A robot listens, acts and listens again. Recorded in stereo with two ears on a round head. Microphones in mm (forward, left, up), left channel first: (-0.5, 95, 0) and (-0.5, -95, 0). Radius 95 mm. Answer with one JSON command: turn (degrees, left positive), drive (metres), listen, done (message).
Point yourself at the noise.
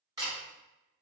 {"turn": -15}
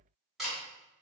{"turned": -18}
{"done": "Found it: a camera shutter, straight ahead, 1 to 2 m away."}